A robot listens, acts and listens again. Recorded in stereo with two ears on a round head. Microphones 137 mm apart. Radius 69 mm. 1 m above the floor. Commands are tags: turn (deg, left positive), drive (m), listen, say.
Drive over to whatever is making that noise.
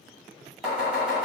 <turn deg="30"/>
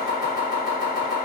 <turn deg="-30"/>
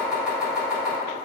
<turn deg="-10"/>
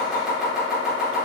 <drive m="1.0"/>
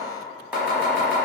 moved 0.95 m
<turn deg="-10"/>
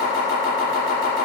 <drive m="1.0"/>
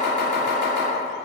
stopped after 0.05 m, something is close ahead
<say>I am next to the chopping.</say>